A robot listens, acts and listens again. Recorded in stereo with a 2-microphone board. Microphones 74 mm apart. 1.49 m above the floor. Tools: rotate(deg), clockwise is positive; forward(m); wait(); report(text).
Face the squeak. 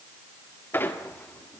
rotate(-25)
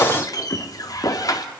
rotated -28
rotate(-125)
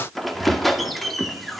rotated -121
report("Found it: a squeak, straight ahead, 1 to 2 m away.")